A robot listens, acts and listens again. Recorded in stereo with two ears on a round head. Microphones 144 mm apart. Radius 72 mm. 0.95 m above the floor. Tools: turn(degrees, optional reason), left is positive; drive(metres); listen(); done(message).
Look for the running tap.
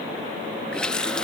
turn(degrees=30)
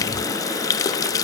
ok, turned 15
turn(degrees=160, reason="So it is at 160° left.")
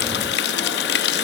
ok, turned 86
turn(degrees=70, reason="The running tap is now 70° left.")
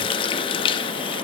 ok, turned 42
turn(degrees=30, reason="The running tap is now 30° left.")
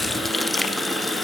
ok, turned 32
done("Facing the running tap.")